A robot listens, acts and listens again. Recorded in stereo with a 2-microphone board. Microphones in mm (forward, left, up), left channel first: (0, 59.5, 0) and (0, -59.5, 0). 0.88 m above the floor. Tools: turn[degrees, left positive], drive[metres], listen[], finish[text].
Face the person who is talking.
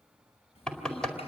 Thought: The child speaking: about 60° left or 120° left.
Action: turn[60]
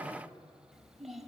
Action: finish[Found it: a child speaking, straight ahead, 2 to 4 m away.]